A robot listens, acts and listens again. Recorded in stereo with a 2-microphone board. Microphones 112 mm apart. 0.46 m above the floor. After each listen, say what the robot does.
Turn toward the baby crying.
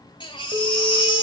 Turn 45° left.
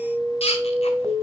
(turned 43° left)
Turn 85° left.
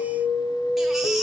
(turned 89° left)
Keep listening.
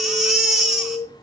Facing the baby crying, 1 to 2 m away.